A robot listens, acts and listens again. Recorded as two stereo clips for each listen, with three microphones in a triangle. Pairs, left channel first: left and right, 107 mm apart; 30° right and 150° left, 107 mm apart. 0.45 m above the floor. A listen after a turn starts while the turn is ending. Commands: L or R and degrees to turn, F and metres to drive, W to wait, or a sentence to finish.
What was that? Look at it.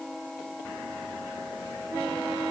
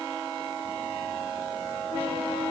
W
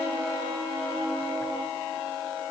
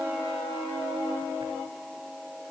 W
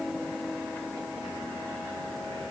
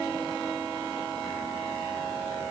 I can't make out anything to turn to.